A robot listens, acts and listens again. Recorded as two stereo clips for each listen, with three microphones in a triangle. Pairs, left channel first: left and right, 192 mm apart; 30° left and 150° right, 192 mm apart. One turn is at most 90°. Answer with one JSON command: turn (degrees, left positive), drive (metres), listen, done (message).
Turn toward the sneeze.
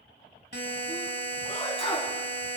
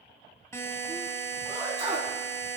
{"turn": 90}
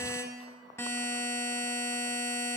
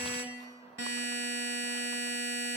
{"turn": 60}
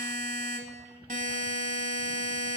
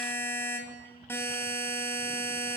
{"done": "Facing where the sneeze came from. I can't hear it now."}